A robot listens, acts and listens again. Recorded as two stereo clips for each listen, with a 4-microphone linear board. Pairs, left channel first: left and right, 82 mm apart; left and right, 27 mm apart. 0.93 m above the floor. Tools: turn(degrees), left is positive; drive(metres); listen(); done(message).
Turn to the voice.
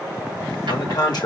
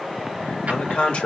turn(degrees=60)
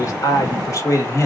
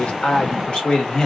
turn(degrees=35)
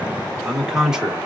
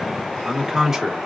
turn(degrees=-10)
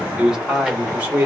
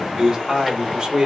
turn(degrees=-20)
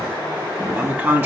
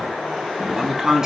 turn(degrees=-20)
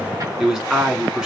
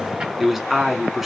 done("Found it: a man speaking, straight ahead.")